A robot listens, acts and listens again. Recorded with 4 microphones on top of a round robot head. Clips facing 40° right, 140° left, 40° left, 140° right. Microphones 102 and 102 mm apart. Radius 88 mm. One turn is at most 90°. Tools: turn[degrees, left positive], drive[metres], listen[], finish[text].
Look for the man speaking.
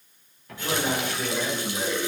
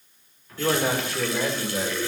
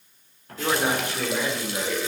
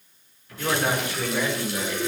Thought: The man speaking: 110° left.
Action: turn[90]
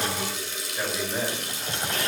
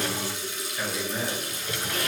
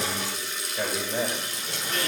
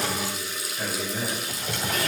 Thought: The man speaking is now 25° left.
Action: turn[25]
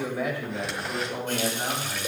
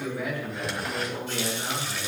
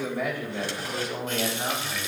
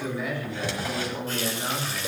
Action: finish[Found it: a man speaking, straight ahead.]